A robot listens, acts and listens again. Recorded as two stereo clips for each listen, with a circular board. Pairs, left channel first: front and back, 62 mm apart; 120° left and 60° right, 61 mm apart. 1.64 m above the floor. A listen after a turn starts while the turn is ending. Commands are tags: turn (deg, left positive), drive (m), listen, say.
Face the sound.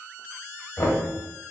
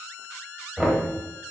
<turn deg="35"/>
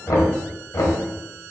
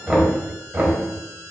<say>Facing the knocking, 1 to 2 m away.</say>